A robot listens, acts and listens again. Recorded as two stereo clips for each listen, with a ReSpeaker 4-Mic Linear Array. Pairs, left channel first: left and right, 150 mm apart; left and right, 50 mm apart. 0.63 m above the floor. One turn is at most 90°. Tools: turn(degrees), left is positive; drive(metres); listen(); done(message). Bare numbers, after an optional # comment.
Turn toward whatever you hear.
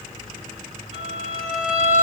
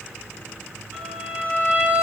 # The violin: about 45° right or 135° right.
turn(-45)
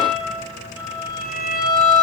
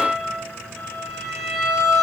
done("Facing the violin.")